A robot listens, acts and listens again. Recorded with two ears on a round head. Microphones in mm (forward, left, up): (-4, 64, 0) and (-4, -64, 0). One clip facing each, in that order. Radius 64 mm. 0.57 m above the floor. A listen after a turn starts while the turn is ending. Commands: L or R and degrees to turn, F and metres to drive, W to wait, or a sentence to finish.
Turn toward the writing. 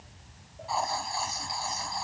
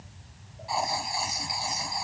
R15
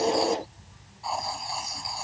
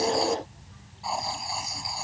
Found it: writing, straight ahead.